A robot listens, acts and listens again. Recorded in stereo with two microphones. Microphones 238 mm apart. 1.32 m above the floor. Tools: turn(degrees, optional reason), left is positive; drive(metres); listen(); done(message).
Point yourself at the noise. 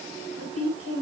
turn(degrees=-65, reason="The woman speaking: about 65° right or 115° right.")
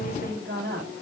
turn(degrees=-45, reason="So it is at 45° right.")
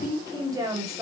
turn(degrees=-15, reason="The woman speaking is now 15° right.")
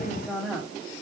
done("Facing the woman speaking, over 4 m away.")